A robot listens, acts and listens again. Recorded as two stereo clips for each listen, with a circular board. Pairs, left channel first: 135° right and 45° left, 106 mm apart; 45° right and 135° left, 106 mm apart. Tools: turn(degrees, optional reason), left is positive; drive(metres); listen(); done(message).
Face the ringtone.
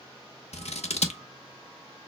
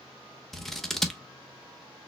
listen()
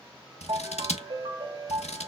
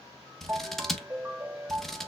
turn(degrees=65, reason="The ringtone: 65° left.")
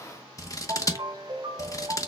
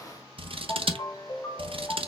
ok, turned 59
done("Facing the ringtone.")